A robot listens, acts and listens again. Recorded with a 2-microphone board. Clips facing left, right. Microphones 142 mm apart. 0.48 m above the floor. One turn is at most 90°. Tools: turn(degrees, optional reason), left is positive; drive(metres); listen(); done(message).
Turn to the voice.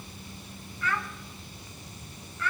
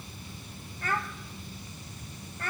turn(degrees=-45, reason="The child speaking: about 45° right or 135° right.")
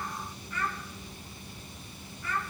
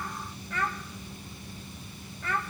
turn(degrees=-85, reason="So it is at 85° right.")
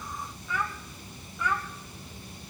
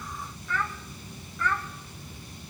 turn(degrees=15, reason="The child speaking is now 15° left.")
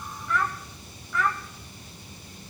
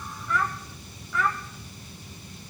done("Facing the child speaking, 1 to 2 m away.")